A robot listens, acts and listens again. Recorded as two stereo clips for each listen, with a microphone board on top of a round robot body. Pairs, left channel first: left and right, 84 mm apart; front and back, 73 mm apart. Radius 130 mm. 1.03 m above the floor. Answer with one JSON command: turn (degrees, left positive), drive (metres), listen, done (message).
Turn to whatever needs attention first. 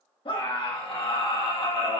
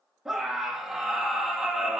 {"turn": 95}
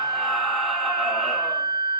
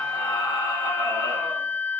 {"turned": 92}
{"done": "Facing the scream."}